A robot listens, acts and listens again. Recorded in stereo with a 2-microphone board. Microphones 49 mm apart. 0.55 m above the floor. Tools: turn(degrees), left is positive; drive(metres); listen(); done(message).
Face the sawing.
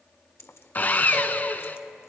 turn(degrees=40)
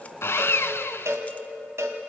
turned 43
turn(degrees=90)
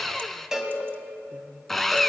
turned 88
done("Found it: sawing, straight ahead, under 1 m away.")